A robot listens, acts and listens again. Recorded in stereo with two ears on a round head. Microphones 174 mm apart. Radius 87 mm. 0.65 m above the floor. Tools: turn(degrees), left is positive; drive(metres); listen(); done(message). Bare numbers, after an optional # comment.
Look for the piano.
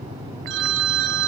listen()
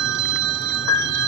turn(90)
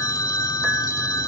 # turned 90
listen()
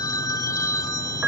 done("Found it: a piano, straight ahead.")